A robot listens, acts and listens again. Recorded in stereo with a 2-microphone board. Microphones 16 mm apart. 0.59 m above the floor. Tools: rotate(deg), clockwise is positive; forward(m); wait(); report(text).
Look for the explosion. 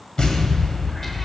rotate(-70)
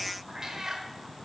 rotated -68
wait()
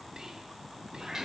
report("I heard an explosion, but can't make it out now. It was about 5° left or 40° left.")